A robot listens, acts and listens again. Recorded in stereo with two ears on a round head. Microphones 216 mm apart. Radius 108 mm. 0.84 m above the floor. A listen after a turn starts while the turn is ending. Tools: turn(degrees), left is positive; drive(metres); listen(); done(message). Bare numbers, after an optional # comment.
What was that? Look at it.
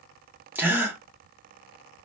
turn(-30)
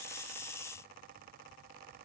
listen()
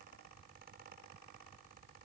done("I heard a gasp, but can't make it out now. It was about 20° left or 140° right.")